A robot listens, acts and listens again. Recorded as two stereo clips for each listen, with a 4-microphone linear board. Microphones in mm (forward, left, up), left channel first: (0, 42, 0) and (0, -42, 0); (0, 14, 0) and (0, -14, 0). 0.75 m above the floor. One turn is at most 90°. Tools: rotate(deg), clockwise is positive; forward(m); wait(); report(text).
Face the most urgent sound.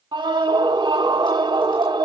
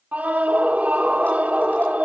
rotate(70)
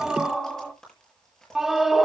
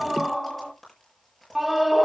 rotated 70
report("Found it: a scream, straight ahead, 1 to 2 m away.")